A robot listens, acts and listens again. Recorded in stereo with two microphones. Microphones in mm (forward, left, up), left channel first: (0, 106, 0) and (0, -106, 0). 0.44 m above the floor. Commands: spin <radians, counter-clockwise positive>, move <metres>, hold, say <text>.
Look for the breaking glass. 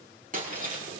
spin -0.70
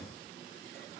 hold
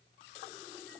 say I heard breaking glass, but can't make it out now. It was about straight ahead or 100° right.